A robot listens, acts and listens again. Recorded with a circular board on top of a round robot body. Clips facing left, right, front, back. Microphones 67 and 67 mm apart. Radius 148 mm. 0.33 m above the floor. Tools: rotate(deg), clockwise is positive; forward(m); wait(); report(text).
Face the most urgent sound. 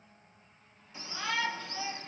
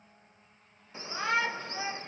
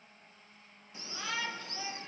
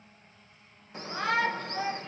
rotate(145)
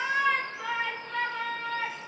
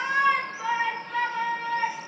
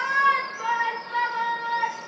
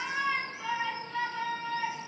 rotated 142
report("Facing the shout.")